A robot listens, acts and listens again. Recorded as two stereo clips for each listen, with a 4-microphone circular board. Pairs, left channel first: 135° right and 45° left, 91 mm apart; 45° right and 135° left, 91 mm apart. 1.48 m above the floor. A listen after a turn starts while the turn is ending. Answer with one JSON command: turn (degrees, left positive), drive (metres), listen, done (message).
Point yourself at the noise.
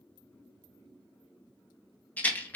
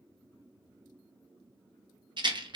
{"turn": 155}
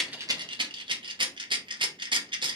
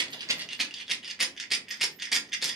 {"turn": 50}
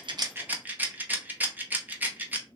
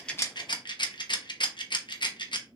{"turn": -20}
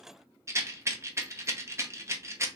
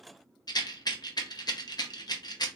{"turn": -10}
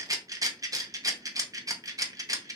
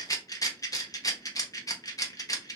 {"done": "Found it: a rattle, straight ahead, under 1 m away."}